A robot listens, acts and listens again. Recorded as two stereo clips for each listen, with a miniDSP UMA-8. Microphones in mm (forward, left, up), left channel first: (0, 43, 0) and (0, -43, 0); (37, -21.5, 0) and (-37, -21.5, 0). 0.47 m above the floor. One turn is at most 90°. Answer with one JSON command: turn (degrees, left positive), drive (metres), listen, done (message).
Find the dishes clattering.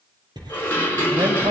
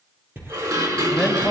{"turn": 90}
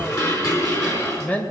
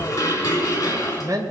{"turn": 40}
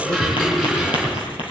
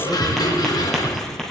{"done": "Found it: dishes clattering, straight ahead, over 4 m away."}